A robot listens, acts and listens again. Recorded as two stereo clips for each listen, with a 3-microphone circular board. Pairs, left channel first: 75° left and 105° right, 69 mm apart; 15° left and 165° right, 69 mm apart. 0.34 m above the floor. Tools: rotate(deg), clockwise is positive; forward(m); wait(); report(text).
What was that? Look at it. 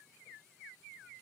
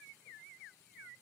wait()
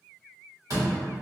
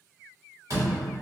rotate(135)
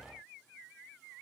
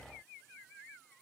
report("I heard a door slam from this way, but can't make it out now.")